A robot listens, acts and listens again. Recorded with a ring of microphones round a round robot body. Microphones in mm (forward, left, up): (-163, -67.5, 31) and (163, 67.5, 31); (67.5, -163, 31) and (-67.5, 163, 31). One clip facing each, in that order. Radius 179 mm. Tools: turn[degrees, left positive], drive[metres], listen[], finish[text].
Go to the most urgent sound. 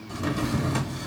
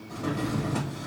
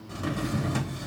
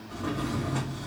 Action: listen[]
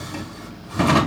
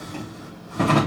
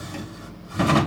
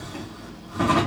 Action: listen[]
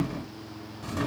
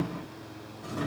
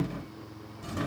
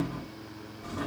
Action: finish[I can't make out anything urgent to turn to.]